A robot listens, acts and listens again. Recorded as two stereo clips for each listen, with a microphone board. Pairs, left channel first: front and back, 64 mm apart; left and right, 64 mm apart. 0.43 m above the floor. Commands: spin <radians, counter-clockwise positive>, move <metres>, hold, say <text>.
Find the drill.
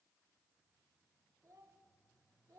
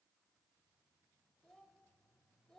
hold
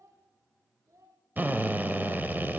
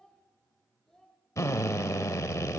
spin 2.18
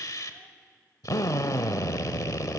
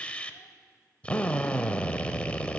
spin 0.35
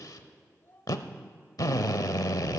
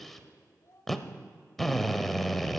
say Facing the drill.